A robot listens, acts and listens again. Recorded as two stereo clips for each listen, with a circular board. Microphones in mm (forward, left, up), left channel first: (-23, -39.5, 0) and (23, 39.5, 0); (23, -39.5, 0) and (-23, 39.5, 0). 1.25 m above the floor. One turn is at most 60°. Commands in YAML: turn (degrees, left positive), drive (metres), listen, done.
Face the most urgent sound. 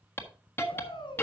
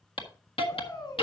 turn: -60
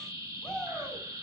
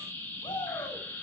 turn: -30
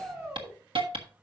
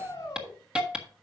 done: "Facing the shout, over 4 m away."